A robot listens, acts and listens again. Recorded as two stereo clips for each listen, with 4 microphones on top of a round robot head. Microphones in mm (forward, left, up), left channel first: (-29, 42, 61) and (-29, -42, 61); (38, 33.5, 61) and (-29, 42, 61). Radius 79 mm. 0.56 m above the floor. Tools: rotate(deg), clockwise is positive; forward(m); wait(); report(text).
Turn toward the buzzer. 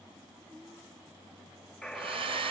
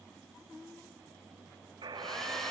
rotate(-175)
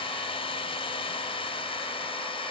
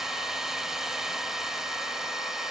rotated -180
wait()
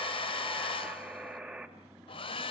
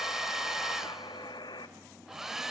report("Facing the buzzer, 2 to 4 m away.")